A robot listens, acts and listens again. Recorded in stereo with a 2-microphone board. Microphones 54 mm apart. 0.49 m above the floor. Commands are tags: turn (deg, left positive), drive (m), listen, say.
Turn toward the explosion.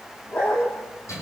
<listen/>
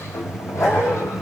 <listen/>
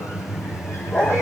<say>I can't make out an explosion, only a sliding door and a dog barking.</say>